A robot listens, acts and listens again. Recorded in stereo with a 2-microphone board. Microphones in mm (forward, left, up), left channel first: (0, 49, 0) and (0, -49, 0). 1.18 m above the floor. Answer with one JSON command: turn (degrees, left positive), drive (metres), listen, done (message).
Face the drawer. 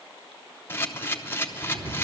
{"turn": -45}
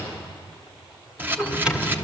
{"turn": -15}
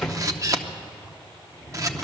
{"done": "Found it: a drawer, straight ahead, 1 to 2 m away."}